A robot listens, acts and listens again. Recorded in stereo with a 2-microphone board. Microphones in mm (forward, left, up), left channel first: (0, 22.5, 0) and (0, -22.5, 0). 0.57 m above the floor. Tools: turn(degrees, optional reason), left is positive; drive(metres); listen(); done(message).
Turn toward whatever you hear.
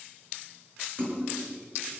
turn(degrees=-45, reason="The splash: about 45° right or 135° right.")
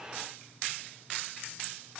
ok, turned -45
listen()
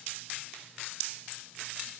done("I heard a splash, but can't make it out now. It was about straight ahead or 90° right.")